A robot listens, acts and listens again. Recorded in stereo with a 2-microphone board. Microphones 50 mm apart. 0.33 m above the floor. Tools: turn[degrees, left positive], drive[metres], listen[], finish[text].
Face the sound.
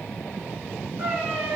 Thought: The cat meowing: about 40° right or 140° right.
Action: turn[-40]
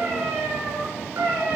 Thought: So it is at 100° right.
Action: turn[-100]
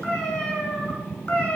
Thought: The cat meowing is now 25° left.
Action: turn[25]
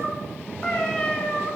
Thought: The cat meowing is now 20° left.
Action: turn[20]
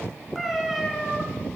Action: finish[Found it: a cat meowing, straight ahead, 1 to 2 m away.]